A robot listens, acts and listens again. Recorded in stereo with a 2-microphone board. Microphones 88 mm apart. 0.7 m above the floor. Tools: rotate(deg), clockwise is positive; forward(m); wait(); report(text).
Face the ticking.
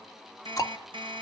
rotate(-40)
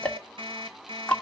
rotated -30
rotate(-15)
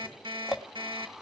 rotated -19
report("Found it: ticking, straight ahead.")